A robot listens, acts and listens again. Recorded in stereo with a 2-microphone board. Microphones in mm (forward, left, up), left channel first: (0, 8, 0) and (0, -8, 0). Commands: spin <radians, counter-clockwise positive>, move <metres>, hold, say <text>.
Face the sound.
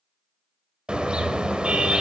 spin -1.57
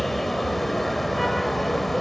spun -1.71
say Facing the car horn, 2 to 4 m away.